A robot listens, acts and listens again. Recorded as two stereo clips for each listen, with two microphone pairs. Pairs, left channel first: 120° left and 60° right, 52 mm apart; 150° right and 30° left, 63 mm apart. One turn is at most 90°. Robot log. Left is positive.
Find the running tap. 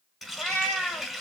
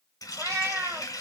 note: The running tap: 150° right.
cmd yaw -90
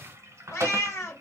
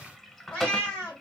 note: The running tap is now 70° right.
cmd yaw -70
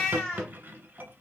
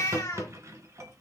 note: The running tap is now 10° right.
cmd yaw -10
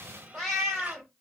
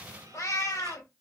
cmd idle
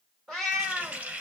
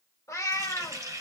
end: Facing the running tap.